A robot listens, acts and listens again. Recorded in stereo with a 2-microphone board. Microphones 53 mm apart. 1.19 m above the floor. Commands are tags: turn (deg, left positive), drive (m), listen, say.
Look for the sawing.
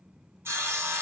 <turn deg="-50"/>
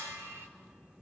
<turn deg="-70"/>
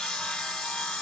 <say>Found it: sawing, straight ahead, 1 to 2 m away.</say>